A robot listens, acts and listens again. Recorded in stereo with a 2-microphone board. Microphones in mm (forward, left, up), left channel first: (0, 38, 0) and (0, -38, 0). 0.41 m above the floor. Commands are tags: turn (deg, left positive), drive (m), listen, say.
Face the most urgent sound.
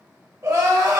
<turn deg="-50"/>
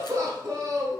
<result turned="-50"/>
<turn deg="-60"/>
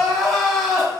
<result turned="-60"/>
<say>Facing the crying, 1 to 2 m away.</say>